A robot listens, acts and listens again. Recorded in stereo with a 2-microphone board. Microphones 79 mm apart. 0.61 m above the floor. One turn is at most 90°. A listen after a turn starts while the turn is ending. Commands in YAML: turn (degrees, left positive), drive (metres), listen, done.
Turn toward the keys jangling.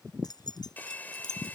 turn: 60
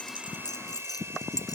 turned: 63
turn: 55
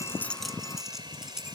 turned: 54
done: "Found it: keys jangling, straight ahead."